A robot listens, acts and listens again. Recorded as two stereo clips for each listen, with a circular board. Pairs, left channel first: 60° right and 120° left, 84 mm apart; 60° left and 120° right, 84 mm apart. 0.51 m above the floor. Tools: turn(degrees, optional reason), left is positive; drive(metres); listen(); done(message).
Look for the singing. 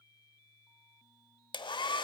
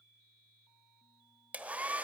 listen()
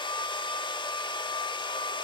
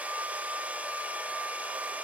listen()
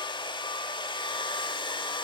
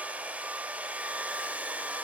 done("I can't make out singing to turn to.")